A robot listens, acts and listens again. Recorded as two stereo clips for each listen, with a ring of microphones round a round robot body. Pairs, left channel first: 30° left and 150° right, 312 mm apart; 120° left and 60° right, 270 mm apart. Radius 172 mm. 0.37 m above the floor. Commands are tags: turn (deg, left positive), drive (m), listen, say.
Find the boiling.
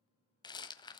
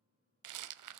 <listen/>
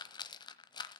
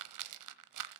<listen/>
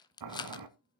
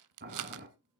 <turn deg="-120"/>
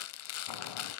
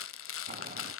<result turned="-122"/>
<listen/>
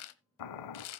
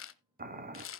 <say>Found it: boiling, straight ahead.</say>